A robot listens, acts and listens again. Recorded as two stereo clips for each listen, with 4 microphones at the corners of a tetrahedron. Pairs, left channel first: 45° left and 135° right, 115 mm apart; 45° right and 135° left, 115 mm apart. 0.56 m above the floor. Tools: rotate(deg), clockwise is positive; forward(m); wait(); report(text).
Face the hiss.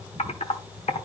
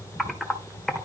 wait()
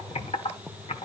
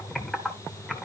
wait()
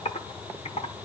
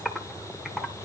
report("I can't make out a hiss, only typing on a keyboard.")